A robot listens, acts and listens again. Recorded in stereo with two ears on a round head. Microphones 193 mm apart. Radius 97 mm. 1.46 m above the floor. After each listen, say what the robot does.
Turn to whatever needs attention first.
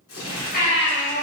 Turn 50° left.
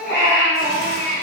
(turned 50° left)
Turn 15° left.
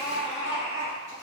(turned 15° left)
Found it: a baby crying, straight ahead, 1 to 2 m away.